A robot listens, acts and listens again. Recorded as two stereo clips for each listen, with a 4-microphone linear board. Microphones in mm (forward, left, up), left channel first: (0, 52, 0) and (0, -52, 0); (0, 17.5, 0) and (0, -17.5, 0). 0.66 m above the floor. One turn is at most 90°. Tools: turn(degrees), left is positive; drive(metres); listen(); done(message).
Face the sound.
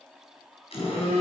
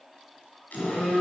turn(degrees=90)
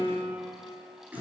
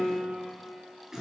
turn(degrees=-15)
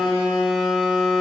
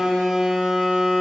done("Facing the phone buzzing.")